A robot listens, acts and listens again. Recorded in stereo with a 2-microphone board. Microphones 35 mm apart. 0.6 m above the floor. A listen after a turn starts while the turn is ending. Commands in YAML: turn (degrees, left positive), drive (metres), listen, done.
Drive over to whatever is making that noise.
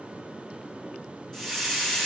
turn: 30
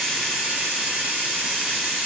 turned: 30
turn: -20
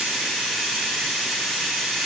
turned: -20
drive: 1.0
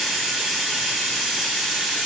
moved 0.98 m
drive: 1.0
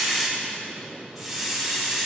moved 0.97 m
drive: 1.0
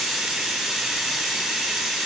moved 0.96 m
turn: -10
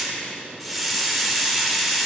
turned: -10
drive: 1.0
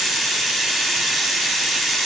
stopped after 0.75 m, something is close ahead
done: "I am next to the hiss."